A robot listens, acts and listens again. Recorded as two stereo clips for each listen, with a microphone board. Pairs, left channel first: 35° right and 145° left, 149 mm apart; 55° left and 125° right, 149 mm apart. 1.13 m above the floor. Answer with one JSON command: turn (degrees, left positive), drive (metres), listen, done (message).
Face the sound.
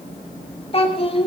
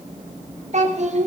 {"turn": -85}
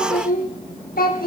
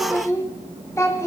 {"turn": -15}
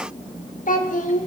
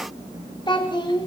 {"done": "Found it: a child speaking, straight ahead, 2 to 4 m away."}